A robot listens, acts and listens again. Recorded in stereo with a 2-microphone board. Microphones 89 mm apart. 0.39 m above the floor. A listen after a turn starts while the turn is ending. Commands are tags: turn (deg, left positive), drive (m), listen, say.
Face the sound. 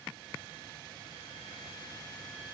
<listen/>
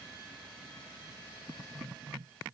<listen/>
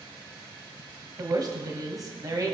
<turn deg="-40"/>
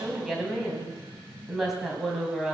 <say>Found it: a woman speaking, straight ahead, 2 to 4 m away.</say>